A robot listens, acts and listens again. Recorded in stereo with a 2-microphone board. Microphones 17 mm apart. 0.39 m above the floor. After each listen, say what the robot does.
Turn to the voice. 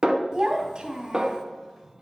Turn 50° right.
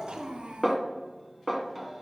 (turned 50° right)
Turn 75° right.
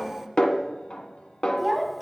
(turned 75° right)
Facing the child speaking.